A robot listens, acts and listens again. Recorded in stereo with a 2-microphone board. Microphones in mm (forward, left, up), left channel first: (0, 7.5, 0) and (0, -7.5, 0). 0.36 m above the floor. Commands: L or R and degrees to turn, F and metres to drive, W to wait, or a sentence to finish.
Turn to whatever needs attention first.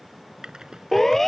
L35
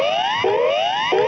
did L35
Facing the siren.